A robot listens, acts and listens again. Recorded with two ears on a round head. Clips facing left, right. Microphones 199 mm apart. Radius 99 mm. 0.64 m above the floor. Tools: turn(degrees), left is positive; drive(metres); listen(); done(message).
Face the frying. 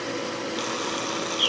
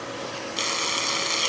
turn(degrees=-35)
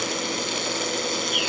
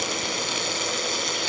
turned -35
done("Facing the frying.")